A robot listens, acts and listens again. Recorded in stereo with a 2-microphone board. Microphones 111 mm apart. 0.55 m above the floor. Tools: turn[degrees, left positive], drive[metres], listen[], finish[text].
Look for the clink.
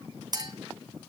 Thought: The clink: about 40° right or 140° right.
Action: turn[-40]
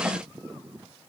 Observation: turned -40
Action: listen[]
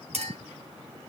Thought: So it is at 100° right.
Action: turn[-100]
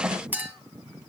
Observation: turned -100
Thought: The clink is now 15° right.
Action: turn[-15]
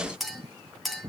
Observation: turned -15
Action: finish[Found it: a clink, straight ahead.]